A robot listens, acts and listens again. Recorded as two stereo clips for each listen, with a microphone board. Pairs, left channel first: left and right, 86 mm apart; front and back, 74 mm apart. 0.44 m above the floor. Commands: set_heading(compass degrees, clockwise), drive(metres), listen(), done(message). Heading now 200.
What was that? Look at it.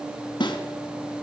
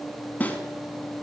set_heading(135)
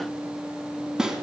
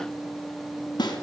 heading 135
done("Found it: a snare drum, straight ahead, 2 to 4 m away.")